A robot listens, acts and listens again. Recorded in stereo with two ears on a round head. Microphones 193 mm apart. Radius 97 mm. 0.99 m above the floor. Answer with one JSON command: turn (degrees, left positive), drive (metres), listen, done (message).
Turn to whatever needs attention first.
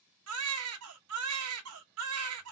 {"turn": -90}
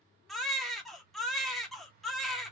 {"done": "Facing the baby crying."}